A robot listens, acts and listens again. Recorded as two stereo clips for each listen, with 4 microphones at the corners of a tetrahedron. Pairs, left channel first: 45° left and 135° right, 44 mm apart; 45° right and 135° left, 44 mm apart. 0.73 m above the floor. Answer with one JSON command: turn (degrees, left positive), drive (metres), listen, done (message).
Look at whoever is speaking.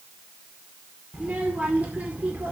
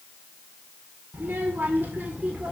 {"turn": 180}
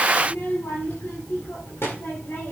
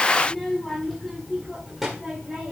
{"turn": 55}
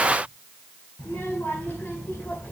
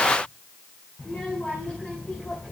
{"turn": 15}
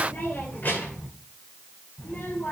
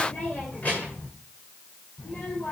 {"done": "Found it: a child speaking, straight ahead, 2 to 4 m away."}